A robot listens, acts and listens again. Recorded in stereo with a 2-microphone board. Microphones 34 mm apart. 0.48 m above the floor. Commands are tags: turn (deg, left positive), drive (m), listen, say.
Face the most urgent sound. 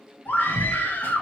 <turn deg="65"/>
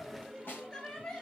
<turn deg="25"/>
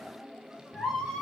<say>Facing the scream.</say>